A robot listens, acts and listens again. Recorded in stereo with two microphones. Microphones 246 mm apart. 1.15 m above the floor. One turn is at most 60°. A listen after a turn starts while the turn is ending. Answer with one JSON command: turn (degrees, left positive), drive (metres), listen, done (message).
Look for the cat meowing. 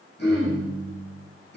{"listen": true}
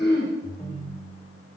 {"listen": true}
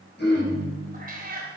{"turn": -40}
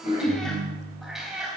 {"done": "Facing the cat meowing."}